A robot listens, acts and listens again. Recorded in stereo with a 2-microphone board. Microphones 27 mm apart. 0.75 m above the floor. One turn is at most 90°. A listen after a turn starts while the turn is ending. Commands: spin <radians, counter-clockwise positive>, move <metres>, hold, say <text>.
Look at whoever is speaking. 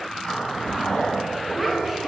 spin -0.52
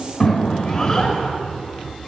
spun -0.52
spin 0.35
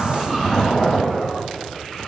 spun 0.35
hold
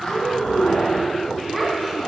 say Found it: a child speaking, straight ahead.